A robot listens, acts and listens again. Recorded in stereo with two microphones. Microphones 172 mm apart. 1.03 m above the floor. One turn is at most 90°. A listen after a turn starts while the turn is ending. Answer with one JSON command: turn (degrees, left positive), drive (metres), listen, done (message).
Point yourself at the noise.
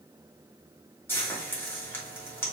{"turn": 30}
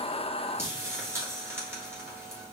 {"turn": -15}
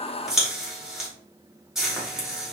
{"done": "Facing the frying."}